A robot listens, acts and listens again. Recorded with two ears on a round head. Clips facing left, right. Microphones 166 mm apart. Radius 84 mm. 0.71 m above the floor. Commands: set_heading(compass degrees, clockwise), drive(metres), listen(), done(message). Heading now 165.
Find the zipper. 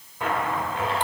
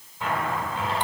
set_heading(120)
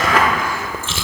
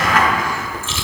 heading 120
set_heading(35)
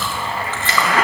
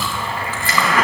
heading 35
set_heading(10)
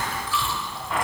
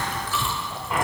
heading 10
done("Facing the zipper.")